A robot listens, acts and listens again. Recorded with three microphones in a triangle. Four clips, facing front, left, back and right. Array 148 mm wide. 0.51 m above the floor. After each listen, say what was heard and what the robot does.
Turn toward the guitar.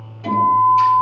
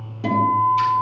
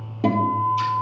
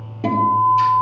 The guitar: 160° right. Turn 160° right.
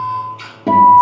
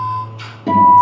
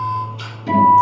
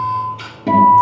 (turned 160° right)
Facing the guitar, over 4 m away.